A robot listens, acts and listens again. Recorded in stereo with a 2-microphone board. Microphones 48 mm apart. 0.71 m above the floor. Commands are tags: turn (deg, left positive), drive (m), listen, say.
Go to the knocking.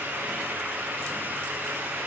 <listen/>
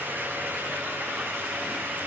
<listen/>
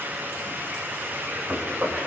<turn deg="-40"/>
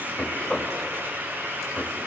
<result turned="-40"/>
<drive m="1.0"/>
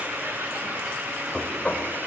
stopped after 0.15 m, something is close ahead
<turn deg="10"/>
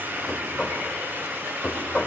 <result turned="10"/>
<say>Blocked. The knocking is further on, straight ahead.</say>